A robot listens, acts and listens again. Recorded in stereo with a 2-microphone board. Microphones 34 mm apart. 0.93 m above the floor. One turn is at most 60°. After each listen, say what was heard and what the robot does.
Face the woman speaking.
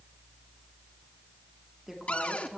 Turn 30° right.
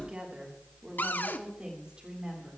So it is at 150° right. Turn 60° right.
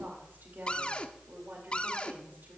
The woman speaking is now 105° right. Turn 60° right.
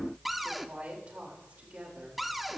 The woman speaking is now 45° right. Turn 45° right.
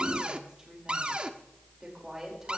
The woman speaking is now 15° right. Turn 15° right.
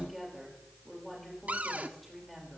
Found it: a woman speaking, straight ahead.